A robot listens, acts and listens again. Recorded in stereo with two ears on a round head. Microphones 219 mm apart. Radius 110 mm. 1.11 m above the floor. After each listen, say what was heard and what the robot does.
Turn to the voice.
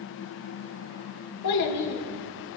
Turn 90° left.
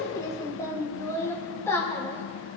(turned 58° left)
So it is at 10° left. Turn 10° left.
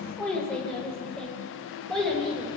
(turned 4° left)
Facing the child speaking.